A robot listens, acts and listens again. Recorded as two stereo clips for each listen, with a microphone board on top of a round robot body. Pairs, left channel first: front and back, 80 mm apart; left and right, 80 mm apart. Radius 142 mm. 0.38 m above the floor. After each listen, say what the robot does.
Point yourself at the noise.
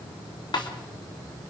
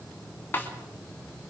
Turn 25° left.
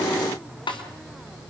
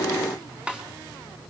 Turn 15° right.
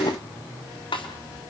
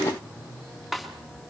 Found it: a snare drum, straight ahead, 2 to 4 m away.